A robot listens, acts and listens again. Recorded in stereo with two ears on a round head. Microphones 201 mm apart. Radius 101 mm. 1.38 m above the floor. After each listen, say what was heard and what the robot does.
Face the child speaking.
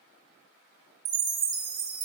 Keep listening.
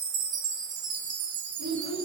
The child speaking: about 75° right or 105° right. Turn 75° right.
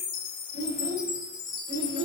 So it is at 45° right. Turn 45° right.
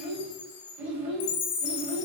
The child speaking is now 10° right. Turn 10° right.
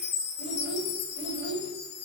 Found it: a child speaking, straight ahead, over 4 m away.